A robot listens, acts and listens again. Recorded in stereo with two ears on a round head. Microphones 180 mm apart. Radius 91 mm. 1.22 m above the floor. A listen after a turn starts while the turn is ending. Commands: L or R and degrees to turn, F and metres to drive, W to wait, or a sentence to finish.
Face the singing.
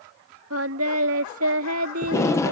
R90
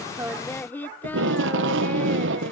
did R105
L10
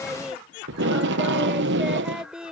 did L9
Facing the singing.